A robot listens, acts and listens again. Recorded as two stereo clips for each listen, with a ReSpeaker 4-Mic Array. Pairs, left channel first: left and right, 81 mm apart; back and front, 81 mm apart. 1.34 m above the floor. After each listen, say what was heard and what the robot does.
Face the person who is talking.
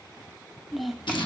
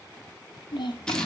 The child speaking: straight behind. Turn 180° left.
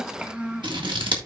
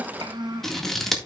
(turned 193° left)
The child speaking is now 15° right. Turn 15° right.
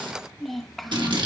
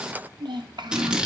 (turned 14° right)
Found it: a child speaking, straight ahead.